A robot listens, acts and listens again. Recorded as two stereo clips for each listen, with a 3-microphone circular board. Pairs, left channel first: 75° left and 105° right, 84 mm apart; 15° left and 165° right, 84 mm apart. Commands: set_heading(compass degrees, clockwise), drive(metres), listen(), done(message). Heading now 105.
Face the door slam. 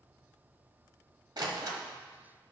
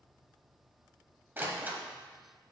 set_heading(210)
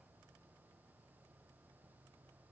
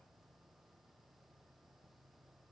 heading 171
set_heading(211)
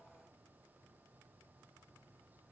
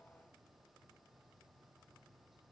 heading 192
set_heading(212)
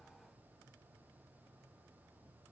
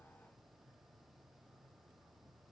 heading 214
done("I heard a door slam from this way, but can't make it out now.")